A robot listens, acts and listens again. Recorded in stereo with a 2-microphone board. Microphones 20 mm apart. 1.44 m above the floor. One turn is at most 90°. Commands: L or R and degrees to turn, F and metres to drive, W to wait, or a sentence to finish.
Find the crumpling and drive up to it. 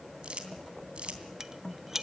R70
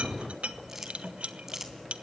R25
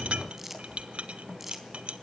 R20
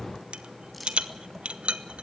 W
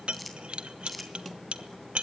F1.0
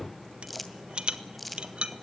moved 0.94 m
F1.0
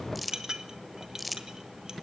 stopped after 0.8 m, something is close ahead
R10
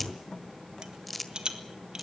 Arrived at the crumpling, straight ahead.